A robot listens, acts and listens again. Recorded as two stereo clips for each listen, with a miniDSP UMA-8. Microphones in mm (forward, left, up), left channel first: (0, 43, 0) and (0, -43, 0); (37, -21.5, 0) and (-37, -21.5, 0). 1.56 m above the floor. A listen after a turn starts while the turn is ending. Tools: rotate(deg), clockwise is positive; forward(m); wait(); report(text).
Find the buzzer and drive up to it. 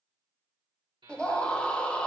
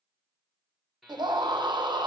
rotate(90)
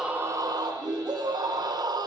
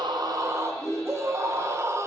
wait()
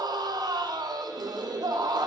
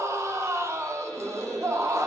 wait()
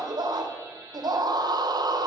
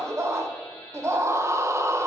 rotate(25)
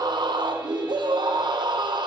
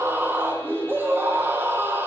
wait()
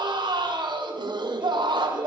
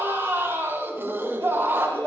wait()
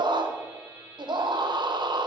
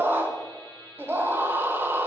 rotate(15)
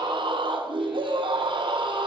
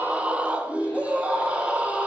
wait()
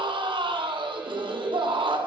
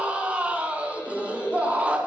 wait()
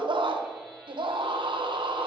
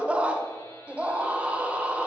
report("Facing where the buzzer came from. I can't hear it now. I did not reach it.")